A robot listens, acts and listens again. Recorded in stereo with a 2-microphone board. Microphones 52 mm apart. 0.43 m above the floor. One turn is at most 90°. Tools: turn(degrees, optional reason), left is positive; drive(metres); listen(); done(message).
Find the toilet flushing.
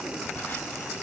listen()
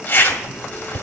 listen()
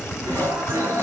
turn(degrees=-50, reason="The toilet flushing: about 50° right or 130° right.")
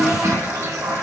turn(degrees=-75, reason="So it is at 75° right.")
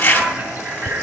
listen()
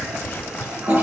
turn(degrees=-35, reason="The toilet flushing is now 35° right.")
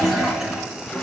turn(degrees=-10, reason="The toilet flushing is now 10° right.")
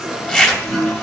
done("Found it: a toilet flushing, straight ahead.")